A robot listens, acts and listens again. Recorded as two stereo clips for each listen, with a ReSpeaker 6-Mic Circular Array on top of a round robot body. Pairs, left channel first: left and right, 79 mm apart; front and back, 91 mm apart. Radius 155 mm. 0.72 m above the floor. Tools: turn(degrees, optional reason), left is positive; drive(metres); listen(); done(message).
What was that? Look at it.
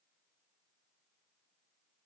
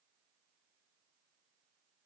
listen()
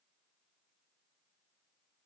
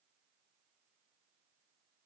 listen()
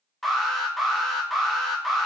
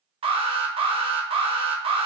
turn(degrees=180, reason="The alarm: straight behind.")
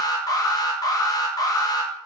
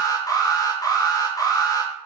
turn(degrees=50, reason="The alarm is now 50° left.")
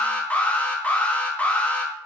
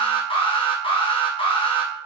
turn(degrees=15, reason="The alarm is now 15° left.")
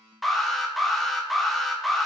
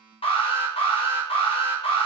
done("Found it: an alarm, straight ahead, under 1 m away.")